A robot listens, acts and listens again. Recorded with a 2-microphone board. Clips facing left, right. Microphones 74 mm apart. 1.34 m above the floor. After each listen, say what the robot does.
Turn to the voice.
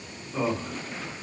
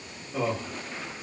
Turn 30° left.
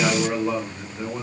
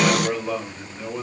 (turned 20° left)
Turn 160° left.
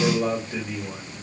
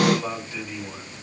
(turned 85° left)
Turn 70° left.
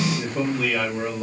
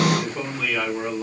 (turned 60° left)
Turn 15° left.
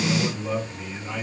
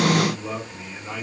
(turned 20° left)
Facing the man speaking, 2 to 4 m away.